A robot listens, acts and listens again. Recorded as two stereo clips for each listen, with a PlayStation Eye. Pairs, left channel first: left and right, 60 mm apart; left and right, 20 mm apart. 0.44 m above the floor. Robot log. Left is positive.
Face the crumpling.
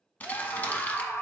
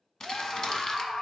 note: The crumpling: about 30° left or 150° left.
cmd yaw +30
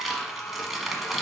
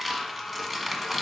end: Found it: crumpling, straight ahead, 1 to 2 m away.